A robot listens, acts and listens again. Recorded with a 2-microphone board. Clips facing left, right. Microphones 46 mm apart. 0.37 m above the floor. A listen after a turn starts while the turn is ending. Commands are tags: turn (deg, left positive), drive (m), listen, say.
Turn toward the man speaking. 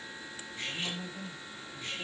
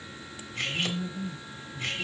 <turn deg="30"/>
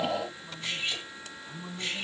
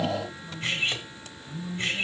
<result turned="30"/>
<turn deg="135"/>
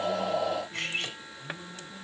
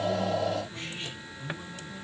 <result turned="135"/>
<turn deg="-15"/>
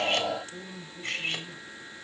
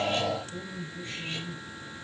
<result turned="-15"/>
<say>Facing the man speaking, over 4 m away.</say>